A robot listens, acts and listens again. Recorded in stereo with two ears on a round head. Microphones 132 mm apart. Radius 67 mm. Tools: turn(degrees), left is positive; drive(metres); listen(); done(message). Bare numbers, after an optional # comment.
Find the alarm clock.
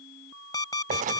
# The alarm clock: about 30° left or 150° left.
turn(30)
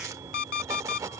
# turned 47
# So it is at 105° left.
turn(105)
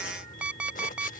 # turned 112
# The alarm clock is now 10° right.
turn(-10)
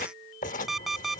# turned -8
done("Facing the alarm clock.")